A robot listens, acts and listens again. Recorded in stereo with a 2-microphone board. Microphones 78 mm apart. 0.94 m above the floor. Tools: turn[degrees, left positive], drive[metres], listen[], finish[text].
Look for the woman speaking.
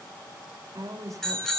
Thought: The woman speaking: about 50° right or 130° right.
Action: turn[-50]
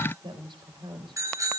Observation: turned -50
Thought: So it is at 80° right.
Action: turn[-80]
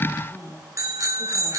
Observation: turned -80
Action: finish[Facing the woman speaking, over 4 m away.]